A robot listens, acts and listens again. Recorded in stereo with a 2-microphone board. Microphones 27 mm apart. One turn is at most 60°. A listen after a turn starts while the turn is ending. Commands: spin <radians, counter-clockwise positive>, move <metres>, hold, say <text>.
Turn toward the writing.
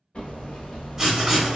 spin -0.26
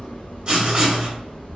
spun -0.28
spin -1.05
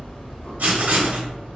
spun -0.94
spin -1.05
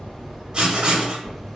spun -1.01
spin -0.61
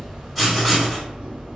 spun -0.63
say Found it: writing, straight ahead.